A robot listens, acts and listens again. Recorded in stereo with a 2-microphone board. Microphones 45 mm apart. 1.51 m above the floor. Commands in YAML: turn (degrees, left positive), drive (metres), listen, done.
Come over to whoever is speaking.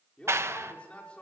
turn: 25
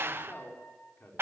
turn: 130
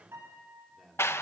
drive: 1.0
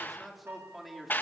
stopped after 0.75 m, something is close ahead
done: "Blocked. The man speaking is further on, straight ahead."